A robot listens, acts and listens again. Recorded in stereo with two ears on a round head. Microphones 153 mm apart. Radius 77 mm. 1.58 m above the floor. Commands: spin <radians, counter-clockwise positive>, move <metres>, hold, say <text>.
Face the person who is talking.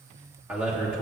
spin -0.52
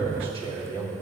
spin -2.53
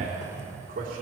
spin -0.70
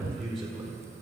say Facing the man speaking, 2 to 4 m away.